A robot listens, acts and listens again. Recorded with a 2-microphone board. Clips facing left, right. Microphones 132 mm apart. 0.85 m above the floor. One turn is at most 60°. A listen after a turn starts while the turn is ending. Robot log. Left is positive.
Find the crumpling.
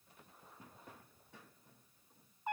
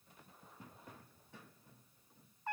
cmd idle
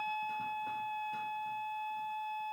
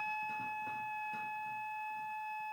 cmd idle
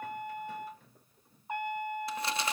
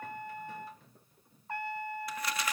note: The crumpling: about 25° left or 155° left.
cmd yaw +25
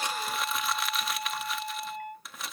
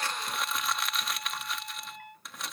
end: Found it: crumpling, straight ahead.